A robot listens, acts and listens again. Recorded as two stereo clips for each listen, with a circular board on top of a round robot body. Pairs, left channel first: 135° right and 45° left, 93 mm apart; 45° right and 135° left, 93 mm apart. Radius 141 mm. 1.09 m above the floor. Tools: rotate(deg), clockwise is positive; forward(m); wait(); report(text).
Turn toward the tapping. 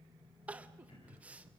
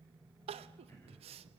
wait()
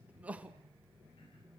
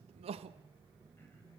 wait()
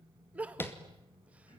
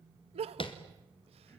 rotate(70)
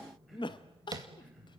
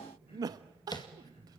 report("Facing the tapping.")